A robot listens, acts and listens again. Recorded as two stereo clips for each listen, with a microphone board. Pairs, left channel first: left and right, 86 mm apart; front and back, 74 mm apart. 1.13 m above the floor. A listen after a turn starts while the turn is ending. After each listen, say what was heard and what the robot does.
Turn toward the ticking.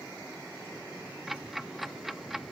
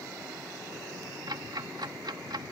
The ticking: straight behind. Turn 180° left.
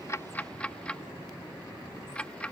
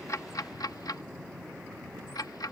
The ticking is now 15° left. Turn 15° left.
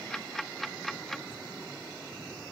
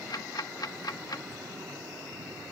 Facing the ticking.